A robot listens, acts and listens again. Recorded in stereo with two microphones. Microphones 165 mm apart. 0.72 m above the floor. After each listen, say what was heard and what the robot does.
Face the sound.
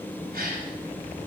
The gasp: about 70° right or 110° right. Turn 70° right.
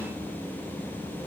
Keep listening.
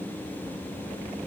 I heard a gasp, but can't make it out now. It was about straight ahead or 40° right.